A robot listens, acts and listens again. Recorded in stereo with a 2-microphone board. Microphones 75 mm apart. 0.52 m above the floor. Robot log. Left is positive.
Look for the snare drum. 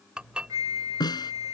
note: The snare drum: about 70° left or 110° left.
cmd yaw +70
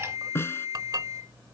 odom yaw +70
note: So it is at 35° left.
cmd yaw +35
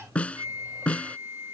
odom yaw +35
note: The snare drum is now 15° left.
cmd yaw +15
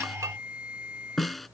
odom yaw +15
end: Found it: a snare drum, straight ahead.